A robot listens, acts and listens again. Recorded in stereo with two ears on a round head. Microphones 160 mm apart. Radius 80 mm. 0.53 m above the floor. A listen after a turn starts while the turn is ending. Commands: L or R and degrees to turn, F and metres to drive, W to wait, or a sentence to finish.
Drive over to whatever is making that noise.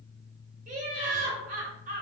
R45
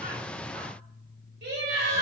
R80
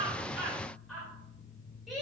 F1.0
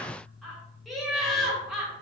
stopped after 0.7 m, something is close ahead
I am next to the laughter.